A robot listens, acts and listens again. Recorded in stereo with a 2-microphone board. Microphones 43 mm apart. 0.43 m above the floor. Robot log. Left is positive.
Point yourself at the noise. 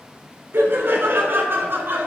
note: The laughter: about 55° right or 125° right.
cmd yaw -55
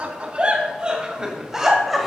end: Found it: laughter, straight ahead.